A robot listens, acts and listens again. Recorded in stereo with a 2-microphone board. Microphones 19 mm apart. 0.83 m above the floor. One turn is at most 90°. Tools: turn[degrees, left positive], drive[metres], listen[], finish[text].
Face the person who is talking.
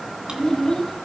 Thought: The child speaking: about 30° left or 150° left.
Action: turn[30]
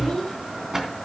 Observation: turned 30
Action: listen[]
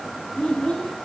Thought: So it is at 120° left.
Action: turn[90]
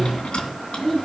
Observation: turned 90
Thought: The child speaking is now 25° left.
Action: turn[25]
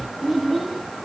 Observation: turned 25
Action: finish[Found it: a child speaking, straight ahead.]